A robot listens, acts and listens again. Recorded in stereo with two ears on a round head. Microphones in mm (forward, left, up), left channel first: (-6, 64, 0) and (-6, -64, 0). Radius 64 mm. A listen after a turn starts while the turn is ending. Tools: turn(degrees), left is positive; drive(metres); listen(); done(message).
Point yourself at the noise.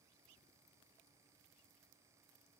listen()
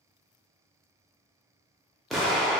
turn(degrees=30)
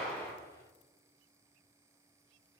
listen()
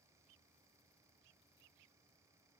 done("I heard an explosion, but can't make it out now. It was about 30° right or 150° left.")